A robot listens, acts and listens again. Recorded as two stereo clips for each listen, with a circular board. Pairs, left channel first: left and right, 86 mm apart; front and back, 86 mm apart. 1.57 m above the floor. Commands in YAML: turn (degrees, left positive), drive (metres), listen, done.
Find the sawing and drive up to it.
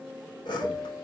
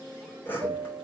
turn: 65
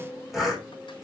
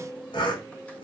drive: 1.0
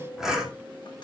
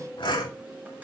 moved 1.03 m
drive: 1.0
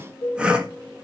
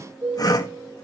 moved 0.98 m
turn: -15
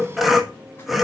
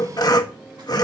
drive: 1.0
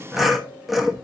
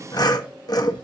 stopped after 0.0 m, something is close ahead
done: "I am next to the sawing."